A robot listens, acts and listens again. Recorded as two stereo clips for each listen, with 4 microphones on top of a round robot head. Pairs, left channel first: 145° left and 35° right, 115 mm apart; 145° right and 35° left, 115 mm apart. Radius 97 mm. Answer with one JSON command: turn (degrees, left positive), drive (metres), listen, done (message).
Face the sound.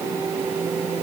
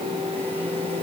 {"listen": true}
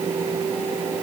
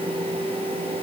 {"listen": true}
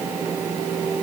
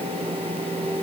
{"done": "I can't make out anything."}